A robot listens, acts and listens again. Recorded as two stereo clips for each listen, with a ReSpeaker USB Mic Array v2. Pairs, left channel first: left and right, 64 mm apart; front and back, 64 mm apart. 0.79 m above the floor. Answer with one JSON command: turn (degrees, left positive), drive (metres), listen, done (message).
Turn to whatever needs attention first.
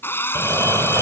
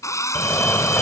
{"turn": -75}
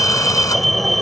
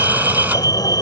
{"done": "Found it: a fire alarm, straight ahead."}